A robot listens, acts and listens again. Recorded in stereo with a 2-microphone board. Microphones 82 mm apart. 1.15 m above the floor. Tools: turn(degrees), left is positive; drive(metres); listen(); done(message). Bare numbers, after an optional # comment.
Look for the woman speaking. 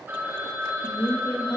# The woman speaking: about 50° left or 130° left.
turn(50)
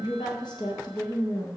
# So it is at 75° left.
turn(75)
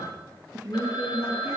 # The woman speaking is now 20° right.
turn(-20)
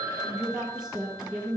done("Found it: a woman speaking, straight ahead, 1 to 2 m away.")